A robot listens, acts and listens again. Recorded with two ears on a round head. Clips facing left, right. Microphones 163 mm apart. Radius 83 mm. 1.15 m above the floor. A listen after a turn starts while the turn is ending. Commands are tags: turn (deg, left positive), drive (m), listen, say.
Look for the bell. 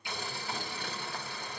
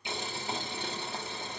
<listen/>
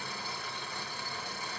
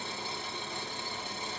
<listen/>
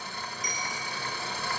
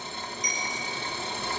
<turn deg="-30"/>
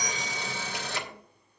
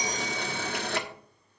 <listen/>
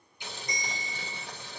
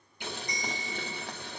<turn deg="20"/>
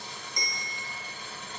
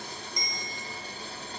<say>Found it: a bell, straight ahead.</say>